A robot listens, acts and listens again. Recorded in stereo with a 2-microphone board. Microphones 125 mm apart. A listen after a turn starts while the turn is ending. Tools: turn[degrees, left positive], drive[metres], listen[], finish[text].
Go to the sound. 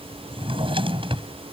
Thought: The drawer: about 45° right or 135° right.
Action: turn[-45]
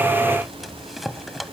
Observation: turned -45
Action: drive[1.0]
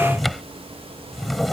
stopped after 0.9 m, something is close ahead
Action: finish[Something is in my way. I am facing the drawer but have not reached it.]